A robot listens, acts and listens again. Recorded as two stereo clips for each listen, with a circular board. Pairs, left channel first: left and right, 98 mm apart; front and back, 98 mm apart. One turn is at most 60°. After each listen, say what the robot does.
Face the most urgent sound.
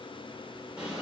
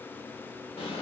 Keep listening.
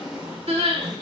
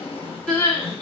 Turn 60° right.
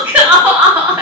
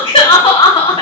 Turn 20° right.
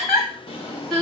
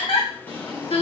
Found it: crying, straight ahead.